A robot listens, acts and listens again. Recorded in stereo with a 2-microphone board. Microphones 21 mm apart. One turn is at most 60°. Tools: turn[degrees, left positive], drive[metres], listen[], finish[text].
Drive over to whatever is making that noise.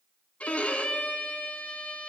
Action: turn[60]
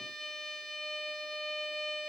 Thought: So it is at 25° left.
Action: turn[25]
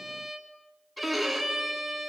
Action: drive[1.0]
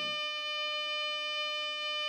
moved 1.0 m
Action: drive[1.0]
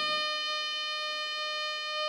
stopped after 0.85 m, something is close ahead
Action: finish[Arrived at the violin, straight ahead.]